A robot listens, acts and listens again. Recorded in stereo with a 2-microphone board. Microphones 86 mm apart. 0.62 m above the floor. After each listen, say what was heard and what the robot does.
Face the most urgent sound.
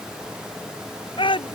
Turn 90° left.
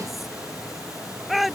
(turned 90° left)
Found it: a shout, straight ahead.